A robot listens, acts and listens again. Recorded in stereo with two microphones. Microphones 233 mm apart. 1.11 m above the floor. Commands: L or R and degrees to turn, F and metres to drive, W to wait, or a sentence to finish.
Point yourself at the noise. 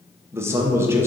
R30
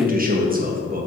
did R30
R140
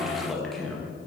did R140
Facing the man speaking.